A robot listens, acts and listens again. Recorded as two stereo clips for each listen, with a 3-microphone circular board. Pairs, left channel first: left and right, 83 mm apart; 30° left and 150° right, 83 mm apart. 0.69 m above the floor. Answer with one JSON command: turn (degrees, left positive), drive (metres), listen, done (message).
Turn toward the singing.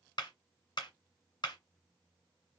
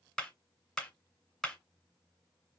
{"listen": true}
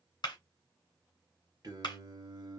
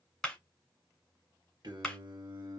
{"turn": -115}
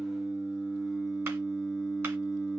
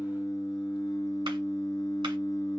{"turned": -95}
{"done": "Facing the singing, 2 to 4 m away."}